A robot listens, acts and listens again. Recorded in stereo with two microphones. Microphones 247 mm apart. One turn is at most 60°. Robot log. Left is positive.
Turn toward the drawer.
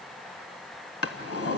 note: The drawer: about 70° left or 110° left.
cmd yaw +60
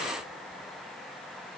cmd idle
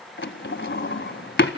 note: So it is at 45° left.
cmd yaw +45
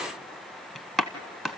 end: Found it: a drawer, straight ahead, 1 to 2 m away.